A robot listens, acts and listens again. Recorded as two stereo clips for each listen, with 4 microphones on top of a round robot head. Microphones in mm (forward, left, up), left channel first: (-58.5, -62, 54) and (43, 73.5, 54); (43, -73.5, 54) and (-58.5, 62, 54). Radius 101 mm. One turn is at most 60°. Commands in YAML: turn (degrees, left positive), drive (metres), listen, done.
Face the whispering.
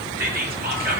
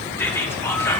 turn: 25
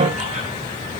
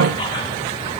listen: true
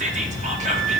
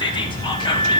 turn: 10
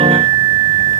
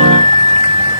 listen: true
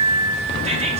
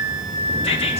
listen: true
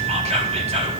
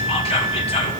done: "Facing the whispering, 1 to 2 m away."